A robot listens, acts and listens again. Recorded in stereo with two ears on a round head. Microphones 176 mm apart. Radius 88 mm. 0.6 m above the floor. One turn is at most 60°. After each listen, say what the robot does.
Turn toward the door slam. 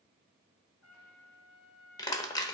Keep listening.
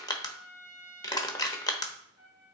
Keep listening.
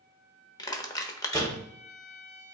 Turn 20° left.
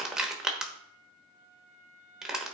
Keep listening.
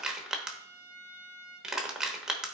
I heard a door slam, but can't make it out now. It was about straight ahead or 140° left.